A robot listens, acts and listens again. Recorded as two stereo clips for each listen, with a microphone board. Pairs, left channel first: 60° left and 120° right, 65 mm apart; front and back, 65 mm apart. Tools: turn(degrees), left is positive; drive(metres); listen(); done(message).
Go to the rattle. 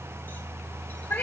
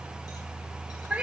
listen()
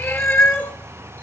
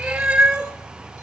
listen()
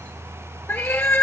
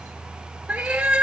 done("I can't make out a rattle to turn to.")